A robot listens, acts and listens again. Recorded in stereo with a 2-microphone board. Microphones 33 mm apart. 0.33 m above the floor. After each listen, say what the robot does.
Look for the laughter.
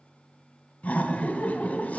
Turn 45° left.
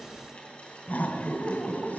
Turn 75° left.
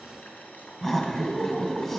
Turn 15° left.
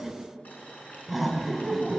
Found it: laughter, straight ahead.